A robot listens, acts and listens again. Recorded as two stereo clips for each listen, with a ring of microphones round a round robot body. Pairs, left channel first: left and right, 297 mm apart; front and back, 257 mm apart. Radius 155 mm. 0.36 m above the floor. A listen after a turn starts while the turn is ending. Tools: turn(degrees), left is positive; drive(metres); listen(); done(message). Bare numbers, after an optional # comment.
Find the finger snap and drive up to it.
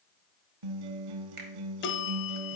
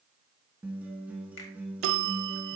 # The finger snap: 35° right.
turn(-35)
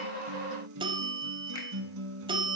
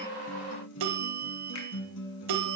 listen()
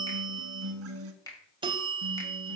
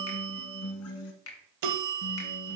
# The finger snap is now 15° left.
turn(15)
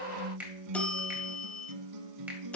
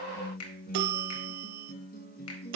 drive(1.0)
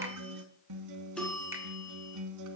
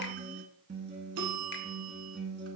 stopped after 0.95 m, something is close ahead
listen()
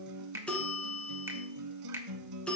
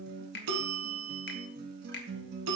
# The finger snap is now 10° right.
turn(-10)
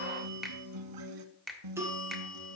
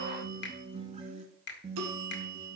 done("I am next to the finger snap.")